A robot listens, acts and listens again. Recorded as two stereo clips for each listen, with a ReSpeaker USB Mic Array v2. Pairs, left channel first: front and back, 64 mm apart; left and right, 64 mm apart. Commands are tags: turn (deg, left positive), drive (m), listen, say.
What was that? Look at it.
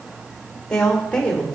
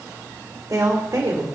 <turn deg="-75"/>
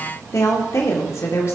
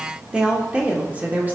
<turn deg="-35"/>
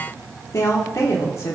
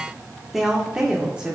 <turn deg="-20"/>
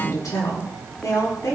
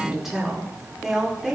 <say>Found it: a woman speaking, straight ahead, 1 to 2 m away.</say>